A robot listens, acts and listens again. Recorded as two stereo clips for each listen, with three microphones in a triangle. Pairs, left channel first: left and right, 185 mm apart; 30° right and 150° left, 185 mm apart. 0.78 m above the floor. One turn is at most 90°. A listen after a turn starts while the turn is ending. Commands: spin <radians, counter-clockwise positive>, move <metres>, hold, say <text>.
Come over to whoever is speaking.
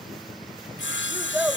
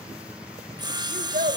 spin -1.57
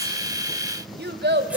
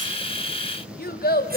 spin -1.13
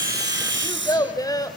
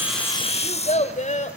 spin 0.35
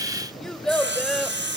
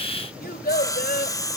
move 1.0
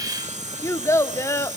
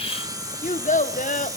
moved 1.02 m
spin 0.26
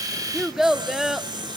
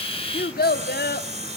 move 1.0
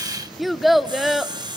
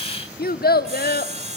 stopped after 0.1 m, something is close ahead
say I am next to the child speaking.